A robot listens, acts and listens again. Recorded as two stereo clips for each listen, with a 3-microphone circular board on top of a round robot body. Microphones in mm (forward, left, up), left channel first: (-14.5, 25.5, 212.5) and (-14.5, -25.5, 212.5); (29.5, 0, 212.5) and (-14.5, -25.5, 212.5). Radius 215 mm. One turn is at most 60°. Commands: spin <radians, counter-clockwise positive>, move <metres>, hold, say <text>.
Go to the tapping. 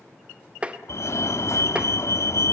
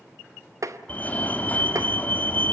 spin -1.05
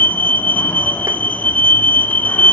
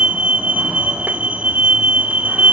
spin -1.05
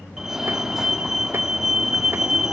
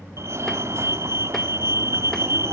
spin -0.61
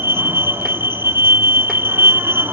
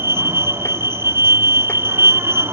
say I heard tapping from this way, but can't make it out now. I did not reach it.